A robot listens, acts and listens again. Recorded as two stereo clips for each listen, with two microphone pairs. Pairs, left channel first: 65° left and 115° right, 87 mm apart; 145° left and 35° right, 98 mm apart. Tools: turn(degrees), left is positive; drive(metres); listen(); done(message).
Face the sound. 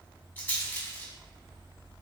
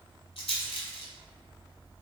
turn(degrees=135)
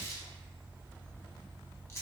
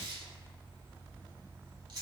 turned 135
turn(degrees=10)
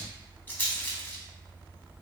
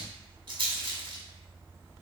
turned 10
done("Found it: a rattle, straight ahead.")